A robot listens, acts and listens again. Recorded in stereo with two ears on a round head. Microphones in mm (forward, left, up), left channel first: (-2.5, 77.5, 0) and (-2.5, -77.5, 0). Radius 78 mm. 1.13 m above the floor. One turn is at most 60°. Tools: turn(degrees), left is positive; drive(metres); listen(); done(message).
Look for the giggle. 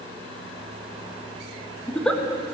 turn(degrees=30)
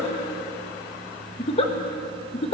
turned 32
turn(degrees=60)
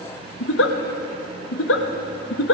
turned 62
turn(degrees=60)
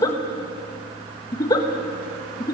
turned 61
turn(degrees=20)
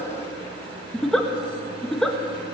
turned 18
done("Facing the giggle.")